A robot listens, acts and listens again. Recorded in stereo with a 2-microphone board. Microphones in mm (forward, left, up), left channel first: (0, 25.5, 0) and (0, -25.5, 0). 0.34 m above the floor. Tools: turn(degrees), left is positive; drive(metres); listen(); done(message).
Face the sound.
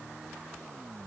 listen()
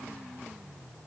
listen()
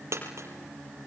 turn(degrees=-65)
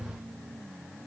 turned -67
listen()
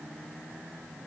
done("I heard a dropped coin, but can't make it out now. It was about straight ahead or 45° right.")